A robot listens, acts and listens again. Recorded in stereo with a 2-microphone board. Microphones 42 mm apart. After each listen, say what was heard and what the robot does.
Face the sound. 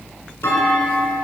Turn 90° left.
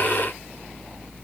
Facing where the clunk came from. I can't hear it now.